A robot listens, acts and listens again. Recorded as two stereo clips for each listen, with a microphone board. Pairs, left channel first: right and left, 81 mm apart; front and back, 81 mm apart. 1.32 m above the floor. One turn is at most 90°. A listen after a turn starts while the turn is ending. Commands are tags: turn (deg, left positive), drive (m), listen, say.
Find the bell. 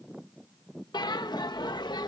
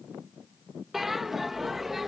<turn deg="-90"/>
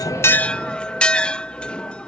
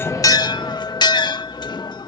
<turn deg="-15"/>
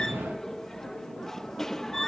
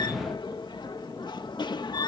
<say>Facing the bell.</say>